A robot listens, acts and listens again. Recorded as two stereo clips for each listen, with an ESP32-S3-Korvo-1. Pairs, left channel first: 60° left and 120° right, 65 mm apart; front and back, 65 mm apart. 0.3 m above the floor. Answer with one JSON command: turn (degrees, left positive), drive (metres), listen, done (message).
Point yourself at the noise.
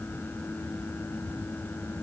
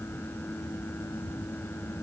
{"listen": true}
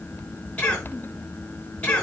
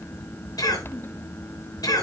{"turn": -10}
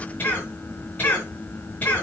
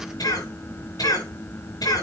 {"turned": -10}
{"done": "Found it: a cough, straight ahead, over 4 m away."}